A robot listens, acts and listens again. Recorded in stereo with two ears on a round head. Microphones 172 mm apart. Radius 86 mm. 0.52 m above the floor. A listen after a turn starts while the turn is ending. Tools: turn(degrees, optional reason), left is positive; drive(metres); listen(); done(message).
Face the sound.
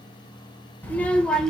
turn(degrees=30)
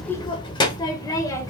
turn(degrees=15, reason="The child speaking: about 15° left or 165° left.")
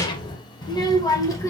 turn(degrees=165, reason="So it is at 165° left.")
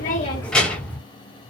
done("Facing the child speaking, 2 to 4 m away.")